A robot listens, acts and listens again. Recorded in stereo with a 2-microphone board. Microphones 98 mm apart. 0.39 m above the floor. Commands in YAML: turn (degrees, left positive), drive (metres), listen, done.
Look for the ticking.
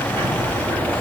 turn: -90
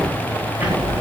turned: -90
turn: -15
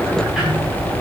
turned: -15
done: "Found it: ticking, straight ahead."